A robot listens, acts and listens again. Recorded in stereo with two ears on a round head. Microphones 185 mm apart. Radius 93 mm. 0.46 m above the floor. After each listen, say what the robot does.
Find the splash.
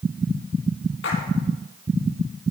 Turn 55° left.
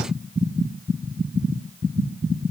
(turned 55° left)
Keep listening.
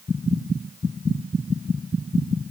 I heard a splash, but can't make it out now. It was about straight ahead or 70° left.